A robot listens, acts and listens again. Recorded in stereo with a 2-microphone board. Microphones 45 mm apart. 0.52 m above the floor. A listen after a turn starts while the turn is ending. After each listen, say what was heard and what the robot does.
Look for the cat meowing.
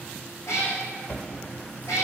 Turn 90° left.
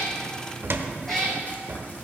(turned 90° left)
So it is at 10° left. Turn 10° left.
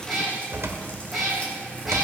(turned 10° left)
Found it: a cat meowing, straight ahead.